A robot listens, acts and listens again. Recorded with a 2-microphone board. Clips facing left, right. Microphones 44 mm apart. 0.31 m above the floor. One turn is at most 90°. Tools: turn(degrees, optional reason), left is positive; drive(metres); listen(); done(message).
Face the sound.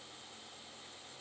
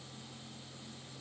listen()
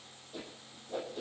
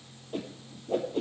turn(degrees=-55, reason="The whoosh: about 55° right or 125° right.")
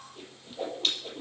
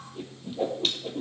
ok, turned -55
done("Facing the whoosh.")